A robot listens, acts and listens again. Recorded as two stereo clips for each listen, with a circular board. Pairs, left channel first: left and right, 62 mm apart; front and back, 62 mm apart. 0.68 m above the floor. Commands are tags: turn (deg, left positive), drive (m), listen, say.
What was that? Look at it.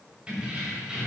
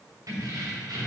<turn deg="-165"/>
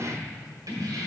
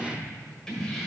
<turn deg="-85"/>
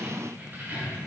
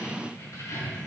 <turn deg="-35"/>
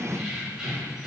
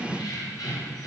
<turn deg="-10"/>
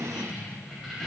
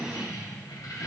<say>Found it: keys jangling, straight ahead, 2 to 4 m away.</say>